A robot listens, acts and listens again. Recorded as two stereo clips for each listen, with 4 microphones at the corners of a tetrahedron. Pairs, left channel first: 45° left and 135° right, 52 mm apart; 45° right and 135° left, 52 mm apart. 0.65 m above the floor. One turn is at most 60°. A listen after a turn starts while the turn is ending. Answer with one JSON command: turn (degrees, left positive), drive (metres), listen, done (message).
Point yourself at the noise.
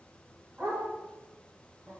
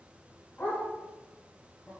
{"turn": -60}
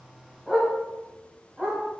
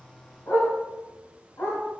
{"turn": -60}
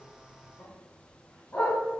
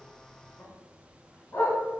{"turn": -15}
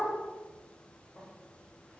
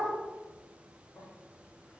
{"listen": true}
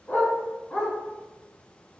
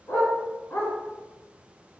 {"turn": -15}
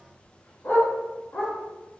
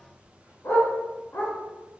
{"done": "Found it: a dog barking, straight ahead, 1 to 2 m away."}